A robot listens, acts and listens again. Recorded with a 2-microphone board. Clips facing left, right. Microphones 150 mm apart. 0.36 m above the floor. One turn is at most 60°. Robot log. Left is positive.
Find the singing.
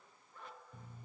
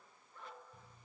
cmd idle
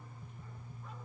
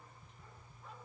cmd idle
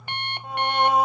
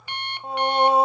note: The singing: about 30° right or 150° right.
cmd yaw -30
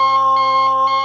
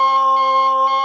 end: Facing the singing.